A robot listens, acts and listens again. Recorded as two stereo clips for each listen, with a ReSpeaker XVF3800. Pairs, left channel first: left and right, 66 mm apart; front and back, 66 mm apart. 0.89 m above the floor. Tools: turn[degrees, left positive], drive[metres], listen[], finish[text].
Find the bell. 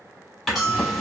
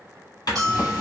Thought: The bell: 175° right.
Action: turn[-175]
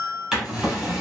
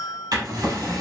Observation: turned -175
Thought: The bell is now 10° left.
Action: turn[10]
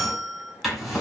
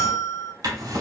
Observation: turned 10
Action: finish[Found it: a bell, straight ahead.]